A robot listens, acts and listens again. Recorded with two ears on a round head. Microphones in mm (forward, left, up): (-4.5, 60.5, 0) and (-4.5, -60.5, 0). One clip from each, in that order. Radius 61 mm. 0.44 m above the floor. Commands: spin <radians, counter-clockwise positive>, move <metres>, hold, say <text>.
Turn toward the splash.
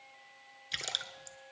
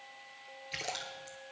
spin 1.22
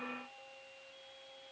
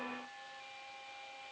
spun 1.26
hold
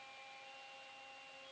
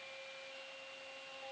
say I heard a splash, but can't make it out now. It was about straight ahead or 35° left.